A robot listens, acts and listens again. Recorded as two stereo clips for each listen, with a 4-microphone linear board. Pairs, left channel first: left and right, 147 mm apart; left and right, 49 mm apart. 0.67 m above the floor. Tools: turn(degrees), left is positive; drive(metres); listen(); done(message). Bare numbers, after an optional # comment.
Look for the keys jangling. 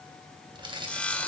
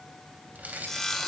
# The keys jangling: about 35° right or 145° right.
turn(-35)
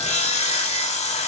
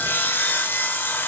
listen()
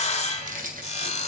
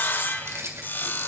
# So it is at 105° right.
turn(-105)
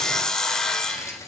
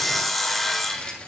# The keys jangling is now 20° left.
turn(20)
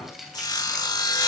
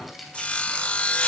done("Found it: keys jangling, straight ahead, 2 to 4 m away.")